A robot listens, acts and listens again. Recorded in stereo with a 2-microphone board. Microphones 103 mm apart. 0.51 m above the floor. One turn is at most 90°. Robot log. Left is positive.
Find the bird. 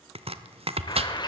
note: The bird: about 45° left or 135° left.
cmd yaw +45
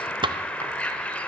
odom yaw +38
note: So it is at 15° left.
cmd yaw +15
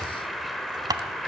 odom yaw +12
end: Found it: a bird, straight ahead.